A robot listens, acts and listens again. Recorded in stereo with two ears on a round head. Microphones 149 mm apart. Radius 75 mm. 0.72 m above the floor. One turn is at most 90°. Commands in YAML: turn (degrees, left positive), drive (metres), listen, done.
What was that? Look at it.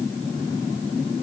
listen: true
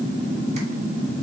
listen: true
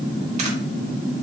done: "I can't make out anything to turn to."